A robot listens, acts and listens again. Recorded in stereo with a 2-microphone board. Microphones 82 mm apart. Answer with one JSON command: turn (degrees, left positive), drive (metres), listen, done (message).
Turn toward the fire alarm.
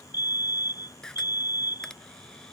{"turn": 55}
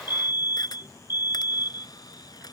{"turn": 70}
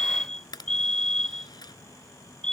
{"turn": 10}
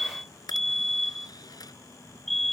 {"done": "Found it: a fire alarm, straight ahead."}